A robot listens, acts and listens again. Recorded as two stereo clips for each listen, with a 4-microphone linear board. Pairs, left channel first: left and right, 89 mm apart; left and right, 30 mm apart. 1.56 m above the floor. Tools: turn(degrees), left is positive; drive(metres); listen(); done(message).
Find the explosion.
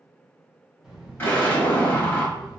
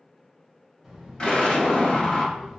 turn(degrees=25)
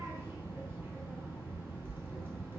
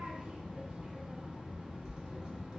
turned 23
listen()
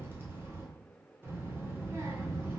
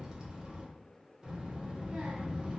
done("I heard an explosion, but can't make it out now. It was about 5° left or 130° left.")